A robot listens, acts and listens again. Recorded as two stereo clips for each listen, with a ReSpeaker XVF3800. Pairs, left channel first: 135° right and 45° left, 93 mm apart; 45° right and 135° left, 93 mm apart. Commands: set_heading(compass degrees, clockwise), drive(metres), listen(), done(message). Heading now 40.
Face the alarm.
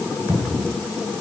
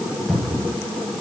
listen()
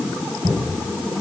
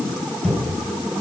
listen()
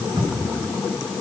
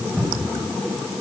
done("I can't make out an alarm, only a cupboard door.")